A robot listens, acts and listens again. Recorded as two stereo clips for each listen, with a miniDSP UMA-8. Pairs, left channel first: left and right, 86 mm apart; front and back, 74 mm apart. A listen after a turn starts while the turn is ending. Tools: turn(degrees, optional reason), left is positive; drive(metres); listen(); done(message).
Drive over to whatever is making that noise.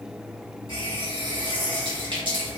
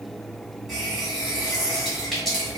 turn(degrees=-85, reason="The running tap: 85° right.")
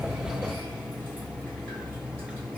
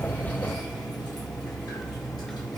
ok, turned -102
turn(degrees=20, reason="The running tap is now 20° left.")
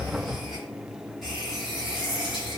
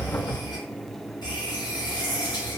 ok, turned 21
drive(metres=1.0)
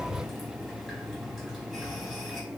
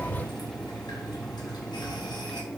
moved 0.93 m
drive(metres=1.0)
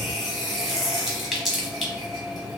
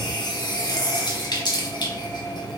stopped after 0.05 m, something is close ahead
done("Arrived at the running tap, straight ahead.")